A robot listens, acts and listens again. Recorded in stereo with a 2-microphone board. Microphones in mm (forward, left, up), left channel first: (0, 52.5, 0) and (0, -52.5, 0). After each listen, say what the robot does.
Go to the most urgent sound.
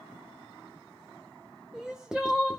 Turn 30° right.
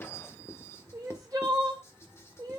Turn 145° right.
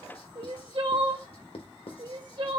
Turn 50° right.
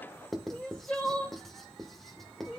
Turn 10° left.
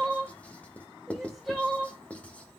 Drive 1.0 m forward.
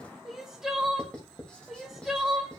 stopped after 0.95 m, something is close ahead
I am next to the crying.